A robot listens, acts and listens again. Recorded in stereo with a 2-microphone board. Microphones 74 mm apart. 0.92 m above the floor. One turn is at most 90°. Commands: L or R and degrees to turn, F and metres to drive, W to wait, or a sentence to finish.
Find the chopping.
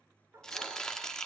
L30
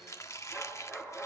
L90
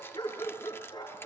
L50
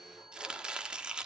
R10
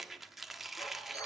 Facing the chopping, 1 to 2 m away.